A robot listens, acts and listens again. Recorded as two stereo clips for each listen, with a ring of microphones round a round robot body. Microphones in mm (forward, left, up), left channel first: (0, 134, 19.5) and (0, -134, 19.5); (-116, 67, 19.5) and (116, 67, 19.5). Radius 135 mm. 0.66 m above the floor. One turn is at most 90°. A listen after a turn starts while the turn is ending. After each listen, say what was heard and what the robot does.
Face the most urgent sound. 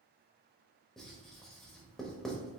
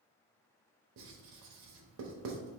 Keep listening.
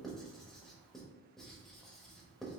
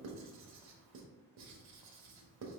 Keep listening.
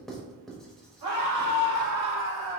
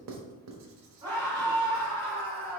The scream: 75° right. Turn 75° right.
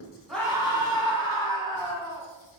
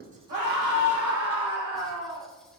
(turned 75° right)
The scream is now 15° left. Turn 15° left.
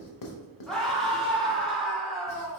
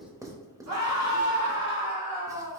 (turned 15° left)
Found it: a scream, straight ahead.